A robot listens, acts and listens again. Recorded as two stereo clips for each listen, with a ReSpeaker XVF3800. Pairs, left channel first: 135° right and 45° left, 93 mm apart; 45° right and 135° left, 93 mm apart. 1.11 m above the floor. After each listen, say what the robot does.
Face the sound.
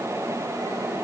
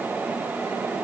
Keep listening.
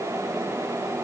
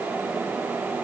Keep listening.
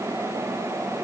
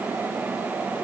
I can't make out anything to turn to.